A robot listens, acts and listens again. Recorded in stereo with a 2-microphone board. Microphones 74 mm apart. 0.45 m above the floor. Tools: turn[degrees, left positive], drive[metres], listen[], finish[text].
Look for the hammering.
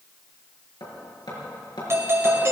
Action: turn[90]
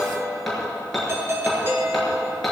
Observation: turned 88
Action: finish[Found it: hammering, straight ahead, over 4 m away.]